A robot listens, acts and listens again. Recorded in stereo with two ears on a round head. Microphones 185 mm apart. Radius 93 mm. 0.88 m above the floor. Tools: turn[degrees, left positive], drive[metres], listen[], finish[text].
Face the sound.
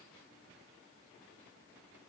Action: listen[]
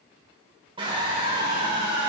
Thought: The scream: about 25° right or 155° right.
Action: turn[-25]
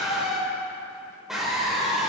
Action: finish[Facing the scream, 2 to 4 m away.]